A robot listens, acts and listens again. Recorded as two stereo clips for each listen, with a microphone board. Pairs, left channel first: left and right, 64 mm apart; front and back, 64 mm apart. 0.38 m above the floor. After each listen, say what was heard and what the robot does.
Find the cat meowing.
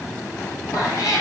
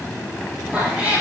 The cat meowing: 110° left. Turn 110° left.
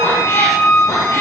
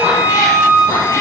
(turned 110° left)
The cat meowing is now 40° left. Turn 40° left.
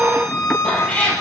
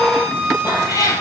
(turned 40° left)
The cat meowing is now 20° left. Turn 20° left.
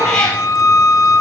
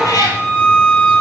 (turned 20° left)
The cat meowing is now 15° left. Turn 15° left.
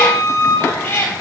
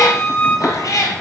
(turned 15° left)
The cat meowing is now 35° left. Turn 35° left.
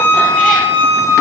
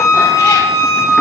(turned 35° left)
Keep listening.
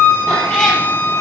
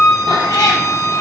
The cat meowing is now 10° left. Turn 10° left.
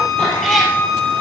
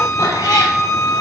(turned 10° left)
Found it: a cat meowing, straight ahead.